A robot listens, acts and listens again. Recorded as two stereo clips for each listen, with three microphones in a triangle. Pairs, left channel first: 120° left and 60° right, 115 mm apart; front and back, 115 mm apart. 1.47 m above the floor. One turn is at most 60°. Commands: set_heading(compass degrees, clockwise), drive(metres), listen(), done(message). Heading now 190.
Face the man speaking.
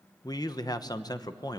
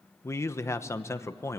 set_heading(130)
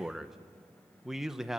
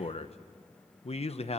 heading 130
set_heading(105)
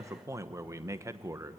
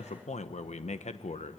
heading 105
done("Facing the man speaking.")